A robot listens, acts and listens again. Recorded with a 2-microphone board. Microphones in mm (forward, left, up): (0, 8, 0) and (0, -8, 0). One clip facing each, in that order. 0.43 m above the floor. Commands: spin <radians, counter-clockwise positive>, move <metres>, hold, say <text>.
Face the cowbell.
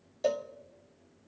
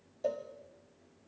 spin 1.13
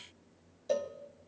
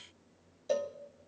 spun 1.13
say Found it: a cowbell, straight ahead.